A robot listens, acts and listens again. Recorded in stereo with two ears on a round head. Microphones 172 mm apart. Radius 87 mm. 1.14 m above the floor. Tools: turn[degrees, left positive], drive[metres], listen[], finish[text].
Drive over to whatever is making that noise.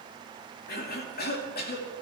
Thought: The cough: about 55° left or 125° left.
Action: turn[55]
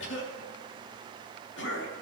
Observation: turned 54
Thought: So it is at 65° left.
Action: turn[65]
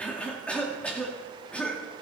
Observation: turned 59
Action: drive[1.0]
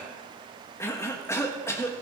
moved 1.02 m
Thought: The cough is now 15° left.
Action: turn[15]
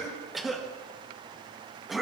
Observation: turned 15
Action: drive[1.0]
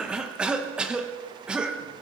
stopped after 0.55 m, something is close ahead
Action: finish[Arrived at the cough, straight ahead.]